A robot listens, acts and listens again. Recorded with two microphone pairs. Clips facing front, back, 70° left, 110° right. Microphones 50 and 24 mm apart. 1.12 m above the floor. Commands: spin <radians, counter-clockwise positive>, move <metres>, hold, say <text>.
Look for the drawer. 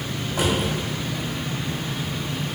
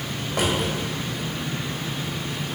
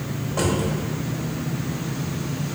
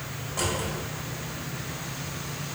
spin 2.62
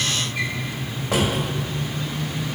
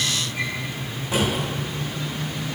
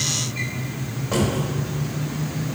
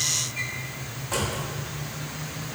spin 0.17
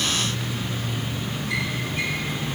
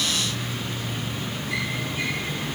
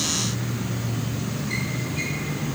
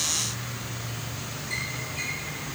hold
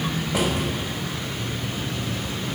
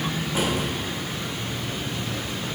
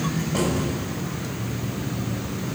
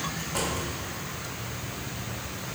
say Found it: a drawer, straight ahead.